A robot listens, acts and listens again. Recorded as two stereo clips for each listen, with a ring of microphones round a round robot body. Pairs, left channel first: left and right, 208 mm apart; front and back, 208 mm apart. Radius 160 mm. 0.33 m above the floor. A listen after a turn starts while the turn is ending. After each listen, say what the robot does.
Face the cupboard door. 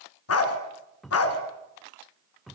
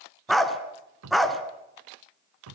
Turn 180° left.
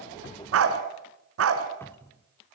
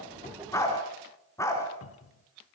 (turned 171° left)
Turn 10° left.
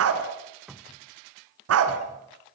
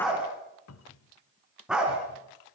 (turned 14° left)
Found it: a cupboard door, straight ahead, 1 to 2 m away.